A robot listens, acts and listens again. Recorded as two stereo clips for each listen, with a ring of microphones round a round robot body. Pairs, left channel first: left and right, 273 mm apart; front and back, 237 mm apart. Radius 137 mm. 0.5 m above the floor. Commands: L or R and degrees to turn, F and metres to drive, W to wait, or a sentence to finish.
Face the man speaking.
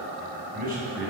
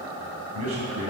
R150
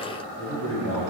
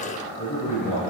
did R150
R45
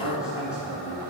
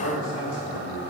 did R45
Facing the man speaking.